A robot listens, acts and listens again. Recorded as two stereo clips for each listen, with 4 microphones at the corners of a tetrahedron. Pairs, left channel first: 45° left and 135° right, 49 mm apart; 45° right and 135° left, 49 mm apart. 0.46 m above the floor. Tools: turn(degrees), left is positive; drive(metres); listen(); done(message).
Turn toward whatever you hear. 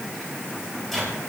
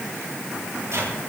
turn(degrees=130)
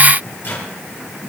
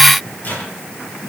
done("Facing the microwave, over 4 m away.")